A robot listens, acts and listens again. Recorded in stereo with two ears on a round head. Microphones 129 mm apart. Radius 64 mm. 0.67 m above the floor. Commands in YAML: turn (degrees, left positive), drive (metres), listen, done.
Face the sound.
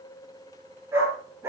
turn: -20
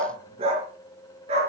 turn: -135
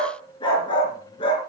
turn: 35
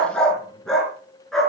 done: "Facing the dog barking."